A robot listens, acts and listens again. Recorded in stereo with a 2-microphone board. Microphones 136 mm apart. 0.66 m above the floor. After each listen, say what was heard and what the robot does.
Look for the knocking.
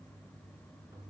Keep listening.
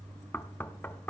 Turn 30° left.
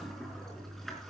Keep listening.
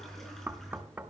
So it is at 15° right. Turn 15° right.
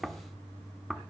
Found it: knocking, straight ahead.